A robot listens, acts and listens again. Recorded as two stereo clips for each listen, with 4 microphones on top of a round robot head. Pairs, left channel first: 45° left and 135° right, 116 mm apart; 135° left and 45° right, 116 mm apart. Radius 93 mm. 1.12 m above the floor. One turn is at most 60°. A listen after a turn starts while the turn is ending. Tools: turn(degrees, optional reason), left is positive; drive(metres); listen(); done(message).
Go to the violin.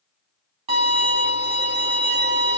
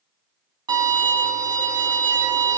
turn(degrees=-60, reason="The violin: 100° right.")
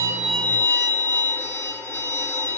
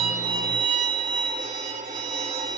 turn(degrees=-25, reason="The violin is now 25° right.")
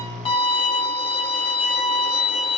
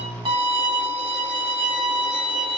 drive(metres=1.0)
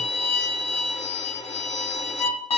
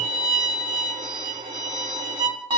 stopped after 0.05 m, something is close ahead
done("Blocked. The violin is further on, straight ahead.")